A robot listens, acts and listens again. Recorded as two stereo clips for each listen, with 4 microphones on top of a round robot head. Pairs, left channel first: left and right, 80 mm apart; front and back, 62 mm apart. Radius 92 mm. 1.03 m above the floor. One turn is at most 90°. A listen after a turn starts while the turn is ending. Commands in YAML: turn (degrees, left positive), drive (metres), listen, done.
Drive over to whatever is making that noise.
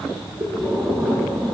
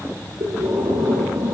turn: -90
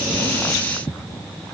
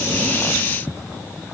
turn: -60
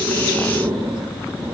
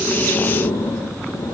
turn: -20
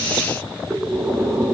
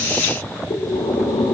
drive: 1.0
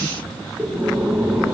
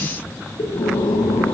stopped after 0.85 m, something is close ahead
turn: -10
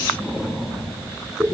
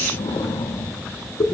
done: "Something is in my way. I am facing the breathing but have not reached it."